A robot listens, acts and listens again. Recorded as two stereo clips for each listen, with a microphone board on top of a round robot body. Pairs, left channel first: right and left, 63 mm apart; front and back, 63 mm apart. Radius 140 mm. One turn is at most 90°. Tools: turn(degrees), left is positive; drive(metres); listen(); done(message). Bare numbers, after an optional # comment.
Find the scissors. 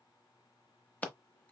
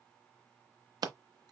# The scissors: 160° right.
turn(-90)
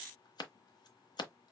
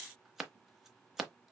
# The scissors is now 95° right.
turn(-90)
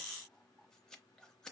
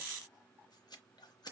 listen()
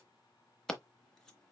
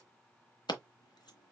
# The scissors is now 10° right.
turn(-10)
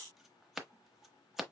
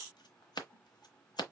done("Facing the scissors.")